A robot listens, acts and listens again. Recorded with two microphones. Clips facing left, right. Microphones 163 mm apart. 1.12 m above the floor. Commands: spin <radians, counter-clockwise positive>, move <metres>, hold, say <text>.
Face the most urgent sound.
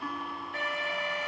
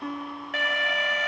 spin -1.57
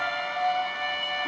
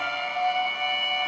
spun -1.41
spin -0.17
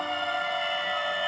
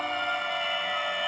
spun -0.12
say Facing the alarm, under 1 m away.